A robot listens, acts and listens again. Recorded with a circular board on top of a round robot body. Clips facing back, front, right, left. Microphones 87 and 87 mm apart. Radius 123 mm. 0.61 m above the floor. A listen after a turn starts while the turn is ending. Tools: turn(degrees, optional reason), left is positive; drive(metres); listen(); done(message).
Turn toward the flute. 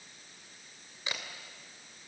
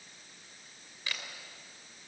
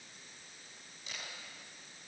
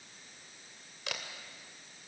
listen()
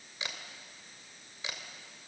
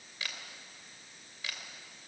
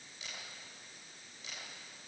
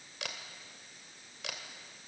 listen()
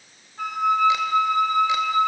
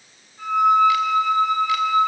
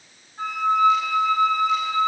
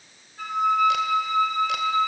turn(degrees=-155, reason="The flute: 155° right.")
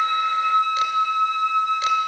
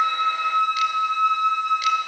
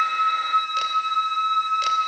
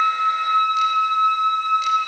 turn(degrees=-25, reason="The flute is now 25° right.")
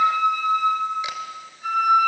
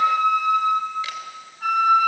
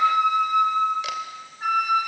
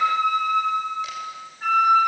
turn(degrees=-10, reason="The flute is now 10° right.")
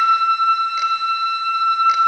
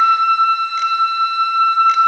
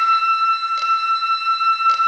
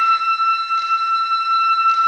done("Facing the flute, over 4 m away.")